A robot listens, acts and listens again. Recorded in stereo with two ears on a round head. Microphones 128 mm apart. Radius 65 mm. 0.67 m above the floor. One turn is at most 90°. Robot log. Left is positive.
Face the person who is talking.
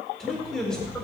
cmd yaw +30
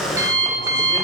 cmd idle
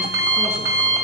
cmd idle
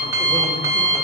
end: I heard a man speaking, but can't make it out now. It was about 25° right or 145° left.